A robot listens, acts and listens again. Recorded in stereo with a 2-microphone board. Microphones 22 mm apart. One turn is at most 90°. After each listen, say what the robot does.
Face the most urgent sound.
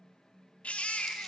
Turn 90° left.
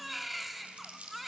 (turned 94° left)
Turn 10° right.
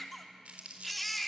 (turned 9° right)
Facing the baby crying, 2 to 4 m away.